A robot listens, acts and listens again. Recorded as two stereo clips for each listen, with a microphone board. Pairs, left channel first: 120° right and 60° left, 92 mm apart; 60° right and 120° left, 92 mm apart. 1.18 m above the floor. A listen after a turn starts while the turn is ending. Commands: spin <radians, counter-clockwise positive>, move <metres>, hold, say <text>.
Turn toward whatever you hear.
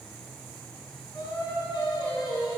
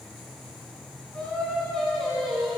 spin -2.62
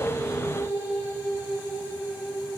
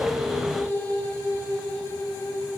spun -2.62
spin -0.26
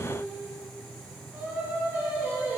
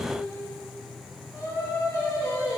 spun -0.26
spin -0.17
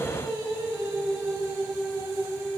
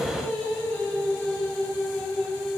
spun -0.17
say Facing the singing, 2 to 4 m away.